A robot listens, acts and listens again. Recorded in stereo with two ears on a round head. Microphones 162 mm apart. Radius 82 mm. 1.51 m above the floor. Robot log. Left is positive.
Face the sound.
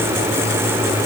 cmd idle
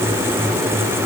cmd idle
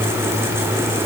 end: I can't make out anything.